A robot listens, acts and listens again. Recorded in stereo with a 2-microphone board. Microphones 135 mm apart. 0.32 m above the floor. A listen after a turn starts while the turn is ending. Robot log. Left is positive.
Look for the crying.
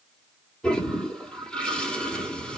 cmd idle
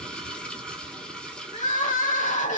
note: The crying: about 70° left or 110° left.
cmd yaw +70
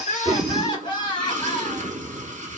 note: So it is at 35° left.
cmd yaw +35
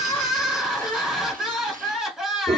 end: Facing the crying, 1 to 2 m away.